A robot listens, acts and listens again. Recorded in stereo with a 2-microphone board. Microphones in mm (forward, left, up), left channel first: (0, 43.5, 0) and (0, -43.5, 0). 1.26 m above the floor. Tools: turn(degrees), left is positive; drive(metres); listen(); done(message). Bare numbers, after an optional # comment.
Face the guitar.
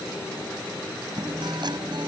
# The guitar: about 60° right or 120° right.
turn(-60)
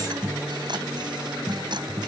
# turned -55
# So it is at 65° right.
turn(-65)
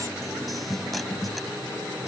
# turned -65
done("Found it: a guitar, straight ahead.")